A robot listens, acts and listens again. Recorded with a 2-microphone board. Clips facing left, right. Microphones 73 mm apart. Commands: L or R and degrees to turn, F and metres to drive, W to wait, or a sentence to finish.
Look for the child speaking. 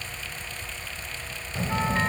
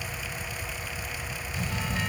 L40
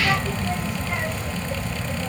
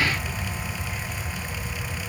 L100
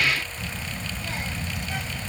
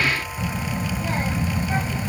R35
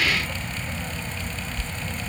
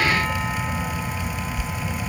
R10
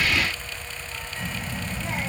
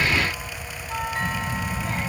Facing the child speaking.